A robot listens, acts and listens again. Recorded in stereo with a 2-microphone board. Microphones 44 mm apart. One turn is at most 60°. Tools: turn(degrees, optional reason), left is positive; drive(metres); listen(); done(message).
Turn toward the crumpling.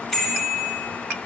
listen()
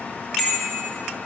listen()
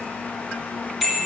done("I can't make out crumpling, only a bicycle bell.")